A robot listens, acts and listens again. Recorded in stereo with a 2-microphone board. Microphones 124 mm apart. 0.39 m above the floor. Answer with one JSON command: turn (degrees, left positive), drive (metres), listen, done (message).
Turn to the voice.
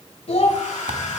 {"turn": 55}
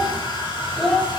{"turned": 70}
{"done": "Facing the child speaking."}